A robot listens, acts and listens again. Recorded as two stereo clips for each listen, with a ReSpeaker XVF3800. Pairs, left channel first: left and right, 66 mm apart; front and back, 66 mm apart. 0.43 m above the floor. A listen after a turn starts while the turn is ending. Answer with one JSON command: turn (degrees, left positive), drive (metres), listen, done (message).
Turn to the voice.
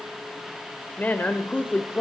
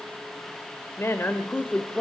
{"turn": 55}
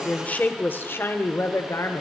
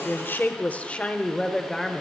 {"turn": 90}
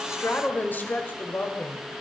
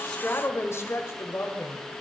{"turn": 45}
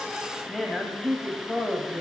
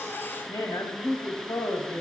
{"done": "Found it: a woman speaking, straight ahead, 2 to 4 m away."}